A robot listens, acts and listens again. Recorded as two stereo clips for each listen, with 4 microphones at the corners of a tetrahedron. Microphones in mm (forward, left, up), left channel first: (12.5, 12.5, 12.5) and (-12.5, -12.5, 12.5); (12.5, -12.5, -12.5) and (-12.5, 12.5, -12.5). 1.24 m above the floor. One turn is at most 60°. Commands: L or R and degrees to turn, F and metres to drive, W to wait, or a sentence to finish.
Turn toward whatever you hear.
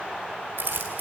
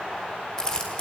R60
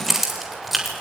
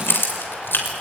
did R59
R45
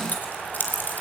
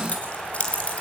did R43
L10
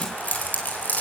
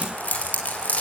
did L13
Facing the keys jangling, over 4 m away.